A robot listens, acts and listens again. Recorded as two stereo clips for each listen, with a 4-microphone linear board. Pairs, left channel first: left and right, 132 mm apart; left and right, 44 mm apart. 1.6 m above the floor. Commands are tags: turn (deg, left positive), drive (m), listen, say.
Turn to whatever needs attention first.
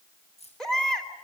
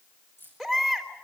<turn deg="30"/>
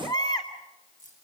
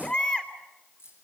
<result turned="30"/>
<turn deg="145"/>
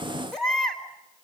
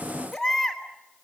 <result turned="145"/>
<say>Facing the baby crying.</say>